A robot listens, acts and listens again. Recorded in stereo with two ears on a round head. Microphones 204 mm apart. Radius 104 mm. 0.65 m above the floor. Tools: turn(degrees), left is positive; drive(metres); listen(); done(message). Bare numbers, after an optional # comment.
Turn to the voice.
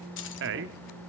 # The man speaking: about 50° right or 130° right.
turn(-50)
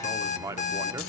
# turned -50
# So it is at 15° right.
turn(-15)
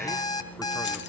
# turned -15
listen()
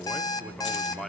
done("Found it: a man speaking, straight ahead, 1 to 2 m away.")